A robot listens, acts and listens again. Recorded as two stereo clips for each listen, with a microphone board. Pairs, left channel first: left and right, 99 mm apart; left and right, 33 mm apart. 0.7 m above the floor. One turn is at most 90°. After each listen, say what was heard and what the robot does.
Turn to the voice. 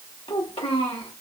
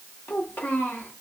The child speaking: about 65° left or 115° left. Turn 65° left.
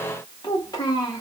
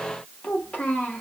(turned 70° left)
So it is at 40° left. Turn 40° left.
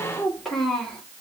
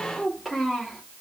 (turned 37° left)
Facing the child speaking, 1 to 2 m away.